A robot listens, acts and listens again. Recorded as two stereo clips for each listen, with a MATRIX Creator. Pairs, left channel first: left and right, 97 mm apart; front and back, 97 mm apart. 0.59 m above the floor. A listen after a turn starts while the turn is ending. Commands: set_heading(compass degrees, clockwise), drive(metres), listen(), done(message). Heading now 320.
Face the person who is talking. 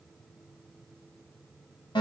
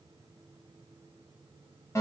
listen()
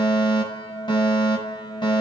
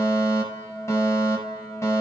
listen()
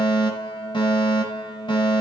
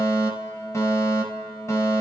done("I can't make out anyone speaking to turn to.")